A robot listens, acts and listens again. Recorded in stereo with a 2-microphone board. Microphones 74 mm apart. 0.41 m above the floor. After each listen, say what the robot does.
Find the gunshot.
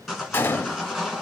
Turn 25° left.
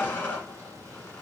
Keep listening.
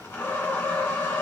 I heard a gunshot, but can't make it out now. It was about straight ahead or 130° left.